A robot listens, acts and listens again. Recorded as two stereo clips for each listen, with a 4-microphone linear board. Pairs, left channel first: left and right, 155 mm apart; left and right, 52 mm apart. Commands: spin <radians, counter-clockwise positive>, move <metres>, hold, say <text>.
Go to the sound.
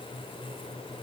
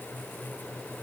hold
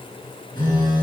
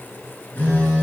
spin 0.44
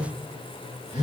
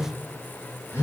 spin 2.27
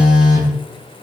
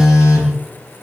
move 1.0
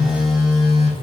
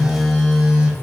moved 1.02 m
move 1.0
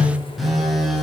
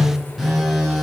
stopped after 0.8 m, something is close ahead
say I am next to the phone buzzing.